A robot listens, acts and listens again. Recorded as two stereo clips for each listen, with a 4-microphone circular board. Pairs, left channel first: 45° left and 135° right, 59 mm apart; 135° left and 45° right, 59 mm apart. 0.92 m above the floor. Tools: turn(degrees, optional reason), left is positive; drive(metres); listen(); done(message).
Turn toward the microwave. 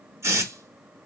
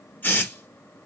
listen()
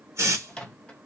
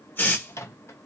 turn(degrees=115, reason="The microwave: 115° left.")
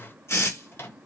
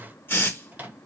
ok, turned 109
turn(degrees=10, reason="The microwave is now 10° left.")
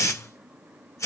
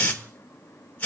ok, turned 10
listen()
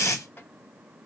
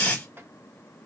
done("Found it: a microwave, straight ahead.")